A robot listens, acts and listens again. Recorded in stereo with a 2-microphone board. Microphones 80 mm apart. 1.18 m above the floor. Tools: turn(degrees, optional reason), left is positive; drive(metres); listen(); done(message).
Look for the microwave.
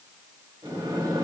turn(degrees=-70, reason="The microwave: about 70° right or 110° right.")
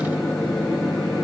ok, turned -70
done("Found it: a microwave, straight ahead.")